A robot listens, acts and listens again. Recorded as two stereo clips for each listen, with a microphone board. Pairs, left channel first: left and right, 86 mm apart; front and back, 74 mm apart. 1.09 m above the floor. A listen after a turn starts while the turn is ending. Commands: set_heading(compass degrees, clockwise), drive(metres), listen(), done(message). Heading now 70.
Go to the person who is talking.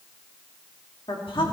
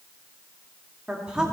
set_heading(330)
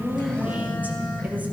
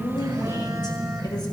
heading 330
listen()
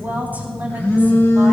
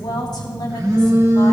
set_heading(350)
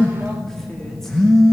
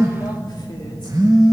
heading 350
listen()
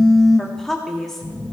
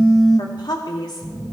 drive(1.0)
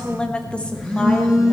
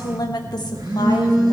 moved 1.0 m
set_heading(340)
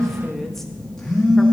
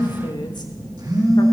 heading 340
listen()
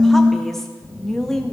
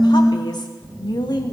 drive(1.0)
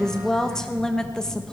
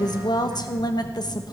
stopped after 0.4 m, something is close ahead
done("Arrived at the woman speaking, straight ahead.")